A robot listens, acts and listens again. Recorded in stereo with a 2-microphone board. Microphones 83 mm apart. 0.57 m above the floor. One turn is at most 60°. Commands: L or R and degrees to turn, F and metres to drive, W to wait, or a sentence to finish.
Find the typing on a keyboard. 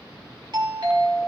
W
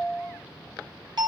W
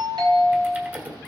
R15
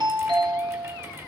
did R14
W
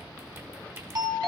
R60
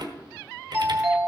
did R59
R60
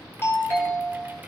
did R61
R25
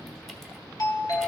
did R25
W
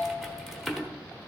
Found it: typing on a keyboard, straight ahead, 1 to 2 m away.